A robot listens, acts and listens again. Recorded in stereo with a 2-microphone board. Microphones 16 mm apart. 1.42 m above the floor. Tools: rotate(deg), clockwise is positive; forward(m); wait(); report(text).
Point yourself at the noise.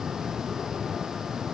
wait()
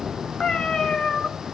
rotate(-60)
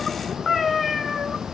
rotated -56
report("Found it: a cat meowing, straight ahead, 2 to 4 m away.")